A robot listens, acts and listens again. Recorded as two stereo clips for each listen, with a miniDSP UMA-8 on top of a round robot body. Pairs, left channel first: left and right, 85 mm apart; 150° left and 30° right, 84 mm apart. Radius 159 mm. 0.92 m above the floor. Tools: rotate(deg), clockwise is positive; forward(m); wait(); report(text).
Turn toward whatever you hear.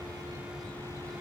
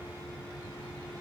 wait()
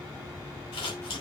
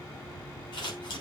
rotate(-115)
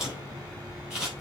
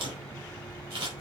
report("Found it: scissors, straight ahead, over 4 m away.")